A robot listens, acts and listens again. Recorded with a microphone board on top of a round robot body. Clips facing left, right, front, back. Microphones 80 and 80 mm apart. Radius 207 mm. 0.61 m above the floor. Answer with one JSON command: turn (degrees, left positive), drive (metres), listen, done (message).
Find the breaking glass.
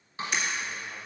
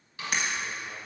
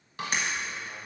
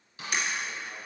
{"turn": -50}
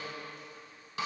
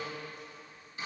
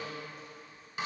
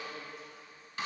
{"done": "I heard breaking glass from this way, but can't make it out now."}